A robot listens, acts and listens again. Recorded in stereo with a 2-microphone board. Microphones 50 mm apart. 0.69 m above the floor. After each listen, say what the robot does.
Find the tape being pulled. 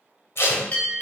Turn 55° left.
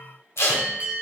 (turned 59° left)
Turn 65° left.
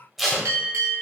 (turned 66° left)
Found it: tape being pulled, straight ahead, 1 to 2 m away.